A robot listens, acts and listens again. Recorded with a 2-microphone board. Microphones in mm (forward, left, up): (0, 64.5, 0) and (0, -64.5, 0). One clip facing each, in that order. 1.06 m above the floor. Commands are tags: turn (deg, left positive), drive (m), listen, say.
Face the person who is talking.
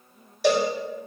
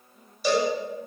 <listen/>
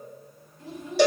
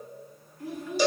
<turn deg="20"/>
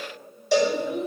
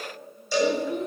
<say>Found it: a child speaking, straight ahead, 2 to 4 m away.</say>